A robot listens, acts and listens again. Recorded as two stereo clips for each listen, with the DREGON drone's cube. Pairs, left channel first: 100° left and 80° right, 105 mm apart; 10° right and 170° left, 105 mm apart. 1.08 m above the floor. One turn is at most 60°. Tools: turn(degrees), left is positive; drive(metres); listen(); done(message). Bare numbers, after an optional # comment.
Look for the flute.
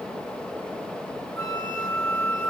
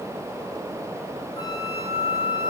# The flute: 35° left.
turn(35)
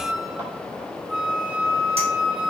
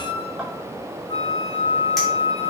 # The flute is now 10° left.
turn(10)
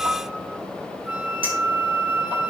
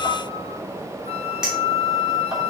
done("Found it: a flute, straight ahead.")